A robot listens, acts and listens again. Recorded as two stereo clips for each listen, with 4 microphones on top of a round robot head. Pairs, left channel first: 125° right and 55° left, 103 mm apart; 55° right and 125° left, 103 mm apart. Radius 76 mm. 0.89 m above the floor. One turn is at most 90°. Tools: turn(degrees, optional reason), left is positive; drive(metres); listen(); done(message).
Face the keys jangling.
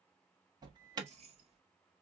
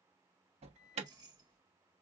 turn(degrees=75, reason="The keys jangling: 75° left.")
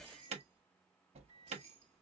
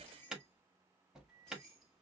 turn(degrees=30, reason="The keys jangling is now 30° left.")
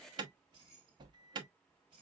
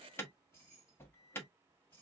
turn(degrees=15, reason="The keys jangling is now 15° left.")
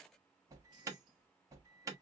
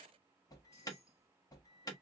done("Found it: keys jangling, straight ahead.")